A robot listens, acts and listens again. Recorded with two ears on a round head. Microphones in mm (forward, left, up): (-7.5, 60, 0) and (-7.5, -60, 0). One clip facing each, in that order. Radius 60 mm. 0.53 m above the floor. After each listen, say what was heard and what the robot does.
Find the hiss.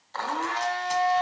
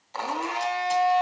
Keep listening.
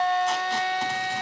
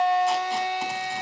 Keep listening.
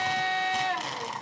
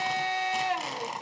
I can't make out a hiss, only a blender and tape being pulled.